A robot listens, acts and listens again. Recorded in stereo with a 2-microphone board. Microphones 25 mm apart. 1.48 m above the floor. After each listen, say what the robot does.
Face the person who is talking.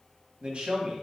Turn 50° right.
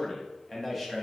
Found it: a man speaking, straight ahead.